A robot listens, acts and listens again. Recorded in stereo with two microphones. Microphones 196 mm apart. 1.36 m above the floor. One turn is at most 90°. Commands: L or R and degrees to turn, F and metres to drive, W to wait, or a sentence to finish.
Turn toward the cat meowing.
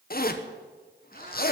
L50
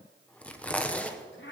L75
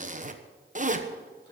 W
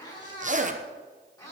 L20
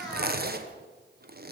Facing the cat meowing, over 4 m away.